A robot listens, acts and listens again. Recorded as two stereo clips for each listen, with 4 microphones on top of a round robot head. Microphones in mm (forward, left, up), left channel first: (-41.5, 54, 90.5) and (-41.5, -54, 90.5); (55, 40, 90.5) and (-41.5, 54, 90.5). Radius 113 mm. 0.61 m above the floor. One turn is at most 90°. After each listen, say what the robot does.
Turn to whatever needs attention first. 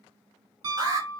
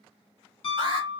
Turn 90° right.
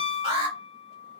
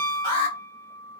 Turn 50° right.
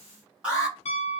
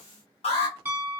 Turn 10° right.
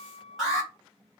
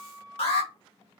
Found it: an alarm, straight ahead.